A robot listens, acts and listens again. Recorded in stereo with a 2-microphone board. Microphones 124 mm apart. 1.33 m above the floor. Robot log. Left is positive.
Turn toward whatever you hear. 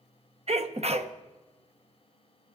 note: The sneeze: about 55° right or 125° right.
cmd yaw -55
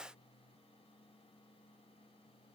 cmd idle
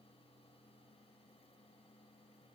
end: I heard a sneeze, but can't make it out now. It was about straight ahead or 70° right.